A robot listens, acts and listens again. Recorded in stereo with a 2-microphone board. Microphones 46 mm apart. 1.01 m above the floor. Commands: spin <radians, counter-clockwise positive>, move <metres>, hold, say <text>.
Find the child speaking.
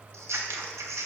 hold
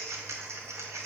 hold
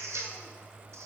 say I can't make out a child speaking, only scissors.